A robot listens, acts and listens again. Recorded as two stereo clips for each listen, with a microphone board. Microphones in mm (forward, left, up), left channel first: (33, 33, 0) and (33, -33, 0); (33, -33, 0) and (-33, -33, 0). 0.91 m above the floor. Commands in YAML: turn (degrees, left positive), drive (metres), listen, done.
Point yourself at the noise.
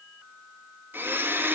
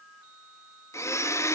turn: -35
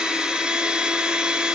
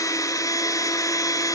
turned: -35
turn: -15
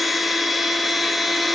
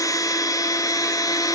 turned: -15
done: "Found it: a blender, straight ahead."